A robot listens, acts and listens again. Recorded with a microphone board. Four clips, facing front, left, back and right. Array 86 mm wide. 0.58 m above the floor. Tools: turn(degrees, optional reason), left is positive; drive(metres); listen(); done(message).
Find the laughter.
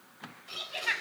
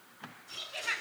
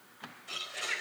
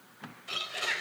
turn(degrees=-10, reason="The laughter: 10° right.")
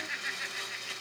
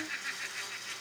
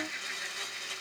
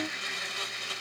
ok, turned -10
listen()
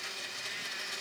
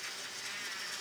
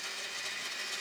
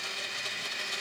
listen()
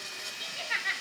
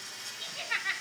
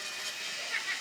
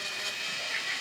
turn(degrees=20, reason="The laughter is now 20° left.")
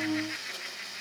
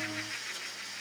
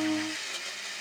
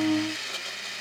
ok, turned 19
listen()
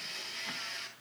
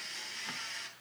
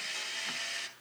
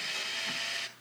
listen()
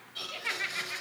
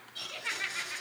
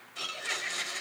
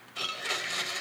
turn(degrees=15, reason="The laughter is now 15° left.")
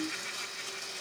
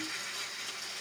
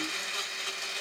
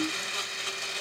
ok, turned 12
listen()
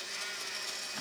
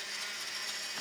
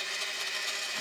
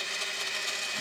listen()
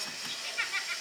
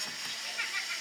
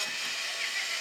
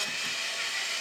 done("I heard laughter from this way, but can't make it out now.")